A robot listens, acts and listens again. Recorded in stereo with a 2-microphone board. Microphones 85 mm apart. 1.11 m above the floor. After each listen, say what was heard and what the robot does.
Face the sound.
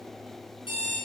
Turn 90° left.
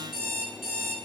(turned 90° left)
Facing the alarm clock.